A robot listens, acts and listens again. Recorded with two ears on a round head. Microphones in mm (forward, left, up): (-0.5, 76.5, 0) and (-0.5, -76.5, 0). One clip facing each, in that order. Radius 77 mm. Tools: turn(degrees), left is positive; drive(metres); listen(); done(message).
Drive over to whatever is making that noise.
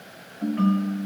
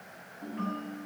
turn(degrees=90)
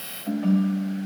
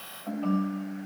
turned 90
turn(degrees=15)
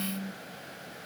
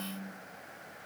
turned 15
drive(metres=1.0)
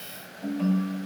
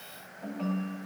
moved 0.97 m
turn(degrees=10)
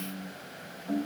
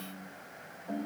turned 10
drive(metres=1.0)
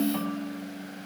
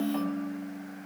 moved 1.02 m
drive(metres=1.0)
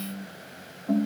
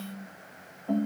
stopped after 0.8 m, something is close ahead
done("I am next to the ringtone.")